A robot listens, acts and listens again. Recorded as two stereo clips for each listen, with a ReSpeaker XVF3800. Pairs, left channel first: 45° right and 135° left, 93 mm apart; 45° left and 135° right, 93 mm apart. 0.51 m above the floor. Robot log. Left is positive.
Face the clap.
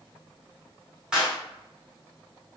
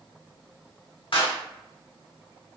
note: The clap: 55° left.
cmd yaw +55
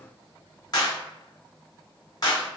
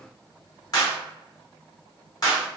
end: Found it: a clap, straight ahead, 1 to 2 m away.